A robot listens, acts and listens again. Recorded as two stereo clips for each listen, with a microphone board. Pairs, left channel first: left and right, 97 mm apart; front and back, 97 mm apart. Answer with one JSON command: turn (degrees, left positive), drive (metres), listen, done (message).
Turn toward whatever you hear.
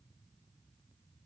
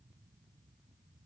{"listen": true}
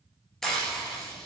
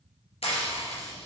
{"done": "Found it: frying, straight ahead."}